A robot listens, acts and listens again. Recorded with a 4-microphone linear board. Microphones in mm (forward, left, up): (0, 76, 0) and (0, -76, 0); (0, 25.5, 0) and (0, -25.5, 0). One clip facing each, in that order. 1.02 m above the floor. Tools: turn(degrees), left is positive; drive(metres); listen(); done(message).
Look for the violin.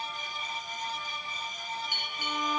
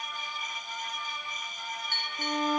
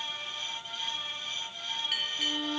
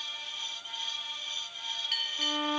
turn(degrees=-45)
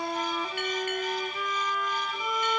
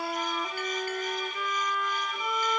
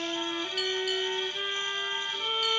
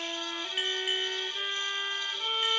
done("Found it: a violin, straight ahead.")